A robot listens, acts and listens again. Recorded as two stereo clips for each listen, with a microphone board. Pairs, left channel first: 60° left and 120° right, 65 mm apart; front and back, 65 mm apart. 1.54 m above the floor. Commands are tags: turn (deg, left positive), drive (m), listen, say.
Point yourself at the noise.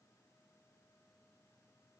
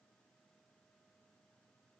<listen/>
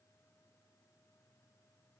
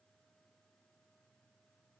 <listen/>
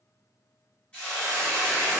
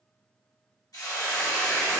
<turn deg="-15"/>
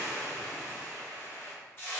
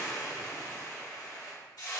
<say>Facing the hiss, 1 to 2 m away.</say>